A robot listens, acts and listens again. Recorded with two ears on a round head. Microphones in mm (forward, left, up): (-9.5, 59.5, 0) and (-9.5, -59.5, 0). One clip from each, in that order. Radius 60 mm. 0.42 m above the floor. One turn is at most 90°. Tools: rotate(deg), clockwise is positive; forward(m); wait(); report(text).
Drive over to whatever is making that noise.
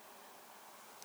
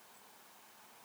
wait()
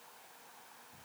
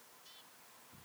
wait()
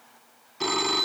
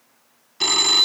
rotate(50)
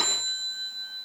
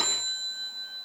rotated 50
forward(1.0)
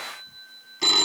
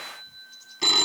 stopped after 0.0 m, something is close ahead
report("Something is in my way. I am facing the phone ringing but have not reached it.")